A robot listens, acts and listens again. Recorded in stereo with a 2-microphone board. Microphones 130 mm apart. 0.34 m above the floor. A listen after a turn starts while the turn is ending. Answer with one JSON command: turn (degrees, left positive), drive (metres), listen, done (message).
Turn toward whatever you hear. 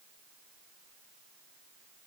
{"listen": true}
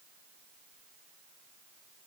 {"listen": true}
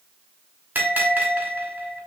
{"turn": -30}
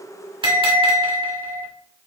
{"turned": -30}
{"turn": -135}
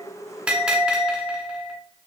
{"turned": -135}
{"turn": -10}
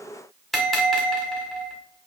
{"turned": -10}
{"done": "Found it: a bell, straight ahead."}